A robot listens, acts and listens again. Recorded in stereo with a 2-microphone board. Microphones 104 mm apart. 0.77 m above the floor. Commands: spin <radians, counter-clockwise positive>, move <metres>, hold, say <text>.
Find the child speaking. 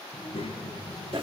spin 0.96
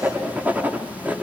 hold
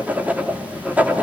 hold
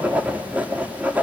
say I heard a child speaking, but can't make it out now. It was about straight ahead or 70° left.